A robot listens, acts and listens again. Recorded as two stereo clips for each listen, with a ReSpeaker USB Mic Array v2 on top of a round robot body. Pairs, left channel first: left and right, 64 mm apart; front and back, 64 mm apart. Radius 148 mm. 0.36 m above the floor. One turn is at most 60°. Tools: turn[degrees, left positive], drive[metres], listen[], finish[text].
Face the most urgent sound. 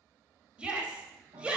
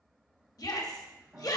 Thought: The shout: 15° right.
Action: turn[-15]
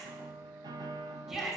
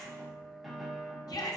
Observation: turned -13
Action: finish[Found it: a shout, straight ahead.]